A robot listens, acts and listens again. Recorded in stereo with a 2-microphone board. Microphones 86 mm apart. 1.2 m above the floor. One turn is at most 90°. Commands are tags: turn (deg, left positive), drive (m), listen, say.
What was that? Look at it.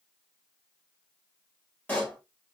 <turn deg="20"/>
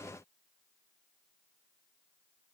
<listen/>
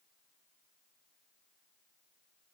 <say>I heard a pop, but can't make it out now. It was about straight ahead or 140° left.</say>